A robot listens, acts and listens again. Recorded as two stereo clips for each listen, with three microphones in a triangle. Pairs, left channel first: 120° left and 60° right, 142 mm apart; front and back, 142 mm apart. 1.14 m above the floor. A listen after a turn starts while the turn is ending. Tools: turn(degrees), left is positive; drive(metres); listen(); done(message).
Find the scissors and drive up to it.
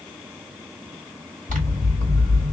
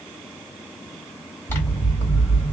turn(degrees=-75)
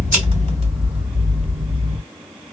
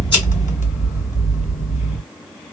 turn(degrees=-25)
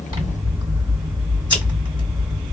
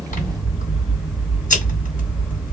drive(metres=1.0)
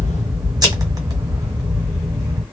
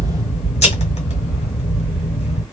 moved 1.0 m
turn(degrees=-10)
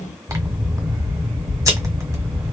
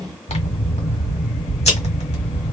drive(metres=1.0)
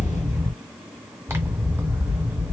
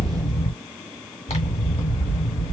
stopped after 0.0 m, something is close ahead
done("I am next to the scissors.")